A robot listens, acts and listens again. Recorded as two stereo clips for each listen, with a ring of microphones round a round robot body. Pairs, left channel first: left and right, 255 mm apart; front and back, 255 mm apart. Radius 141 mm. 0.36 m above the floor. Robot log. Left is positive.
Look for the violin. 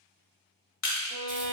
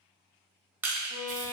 note: The violin: 50° left.
cmd yaw +50
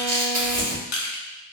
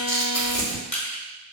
cmd idle
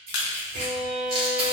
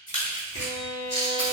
note: The violin is now 15° left.
cmd yaw +15
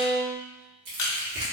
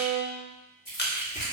end: Facing the violin.